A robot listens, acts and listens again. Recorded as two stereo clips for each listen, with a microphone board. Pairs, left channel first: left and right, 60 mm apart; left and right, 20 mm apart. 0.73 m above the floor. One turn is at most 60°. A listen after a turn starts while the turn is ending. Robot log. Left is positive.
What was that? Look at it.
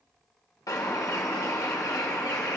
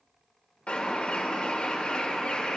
cmd yaw +60
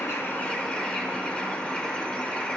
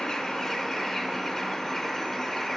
note: So it is at 20° left.
cmd yaw +20
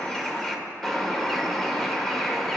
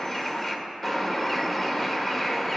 end: Found it: a bird, straight ahead.